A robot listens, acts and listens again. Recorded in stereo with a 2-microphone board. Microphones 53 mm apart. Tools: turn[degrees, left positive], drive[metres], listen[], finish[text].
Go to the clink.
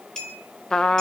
Action: turn[30]
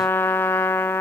Action: listen[]
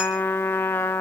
Action: listen[]
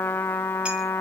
Action: finish[I heard a clink, but can't make it out now. It was about 20° right or 140° left. I did not reach it.]